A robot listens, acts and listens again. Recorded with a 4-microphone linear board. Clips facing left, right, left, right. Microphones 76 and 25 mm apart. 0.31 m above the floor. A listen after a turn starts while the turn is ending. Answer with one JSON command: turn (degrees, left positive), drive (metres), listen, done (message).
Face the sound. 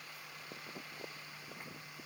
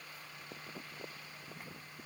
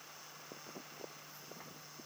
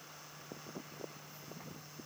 {"listen": true}
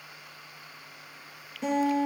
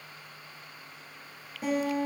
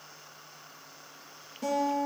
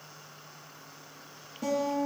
{"turn": -30}
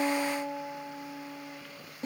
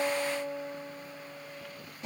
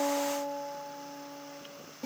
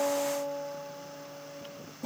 {"turn": 30}
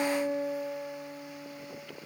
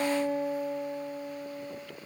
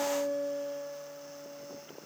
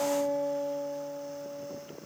{"done": "Facing the guitar."}